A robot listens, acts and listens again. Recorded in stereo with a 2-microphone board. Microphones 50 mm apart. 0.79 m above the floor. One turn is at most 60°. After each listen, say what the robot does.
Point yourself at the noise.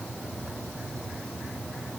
Keep listening.
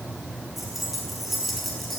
Turn 30° left.
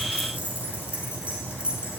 Turn 25° right.
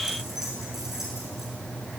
Turn 10° right.
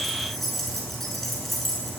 Found it: keys jangling, straight ahead, over 4 m away.